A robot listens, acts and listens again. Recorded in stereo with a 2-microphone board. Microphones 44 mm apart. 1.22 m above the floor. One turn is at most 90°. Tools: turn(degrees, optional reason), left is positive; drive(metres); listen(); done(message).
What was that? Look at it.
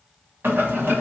turn(degrees=-65, reason="The boiling: about 65° right or 115° right.")
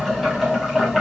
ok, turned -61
done("Facing the boiling, 1 to 2 m away.")